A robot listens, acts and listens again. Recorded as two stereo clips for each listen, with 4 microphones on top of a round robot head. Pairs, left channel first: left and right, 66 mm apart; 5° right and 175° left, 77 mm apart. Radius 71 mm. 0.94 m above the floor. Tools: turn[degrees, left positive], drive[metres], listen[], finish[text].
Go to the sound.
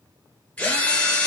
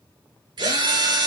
Thought: The drill: 160° left.
Action: turn[160]
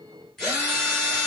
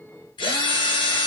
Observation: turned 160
Action: drive[1.0]
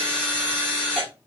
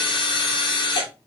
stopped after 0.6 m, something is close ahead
Thought: The drill is now 10° left.
Action: turn[10]
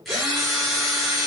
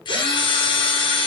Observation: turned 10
Action: finish[Something is in my way. I am facing the drill but have not reached it.]